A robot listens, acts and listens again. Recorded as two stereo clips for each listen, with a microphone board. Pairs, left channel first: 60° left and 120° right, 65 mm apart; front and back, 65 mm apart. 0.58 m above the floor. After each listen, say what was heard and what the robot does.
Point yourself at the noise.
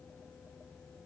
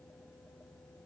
Keep listening.
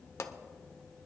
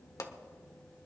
The pop: 20° left. Turn 20° left.
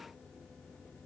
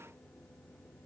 Facing where the pop came from. I can't hear it now.